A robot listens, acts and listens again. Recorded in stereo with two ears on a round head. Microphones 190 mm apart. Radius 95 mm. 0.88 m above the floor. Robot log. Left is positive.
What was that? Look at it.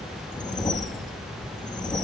note: The whoosh: about 20° left or 160° left.
cmd yaw +20
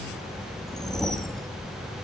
end: Found it: a whoosh, straight ahead, under 1 m away.